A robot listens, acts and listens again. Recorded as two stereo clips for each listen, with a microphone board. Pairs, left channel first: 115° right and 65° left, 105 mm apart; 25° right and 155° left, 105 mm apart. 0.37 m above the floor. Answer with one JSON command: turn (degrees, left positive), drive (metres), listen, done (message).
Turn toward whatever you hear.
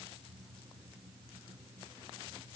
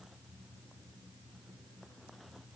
{"listen": true}
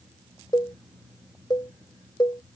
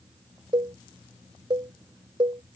{"turn": -160}
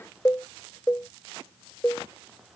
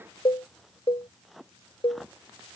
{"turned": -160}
{"turn": -50}
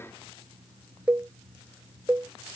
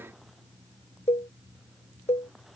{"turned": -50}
{"turn": -10}
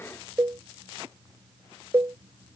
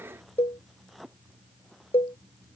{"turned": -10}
{"done": "Facing the cowbell."}